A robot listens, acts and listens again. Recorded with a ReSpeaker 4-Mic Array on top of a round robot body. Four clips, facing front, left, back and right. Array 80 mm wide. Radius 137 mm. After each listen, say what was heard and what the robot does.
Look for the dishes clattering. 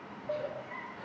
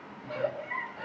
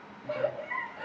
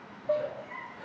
The dishes clattering: 90° right. Turn 90° right.
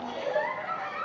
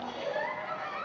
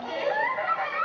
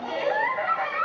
Keep listening.
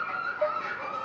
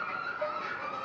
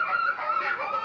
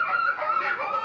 Keep listening.
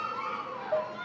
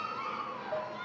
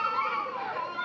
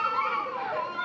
Facing where the dishes clattering came from. I can't hear it now.